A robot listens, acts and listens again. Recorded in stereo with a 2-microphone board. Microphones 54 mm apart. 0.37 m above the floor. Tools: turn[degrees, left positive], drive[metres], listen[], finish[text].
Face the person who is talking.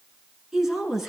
Action: turn[-30]
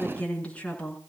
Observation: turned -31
Thought: So it is at 20° left.
Action: turn[20]
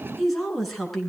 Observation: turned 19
Action: finish[Facing the woman speaking.]